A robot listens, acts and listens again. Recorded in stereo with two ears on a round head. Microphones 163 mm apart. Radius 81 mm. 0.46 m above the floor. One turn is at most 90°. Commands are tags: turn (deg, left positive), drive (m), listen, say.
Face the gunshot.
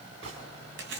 <turn deg="-75"/>
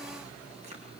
<listen/>
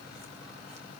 <say>I heard a gunshot, but can't make it out now. It was about straight ahead or 30° right.</say>